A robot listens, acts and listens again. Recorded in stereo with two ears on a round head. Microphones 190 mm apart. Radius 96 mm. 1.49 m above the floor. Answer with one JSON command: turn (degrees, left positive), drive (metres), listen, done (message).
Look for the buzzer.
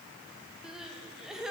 {"listen": true}
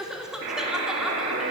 {"turn": -55}
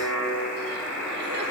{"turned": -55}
{"done": "Facing the buzzer."}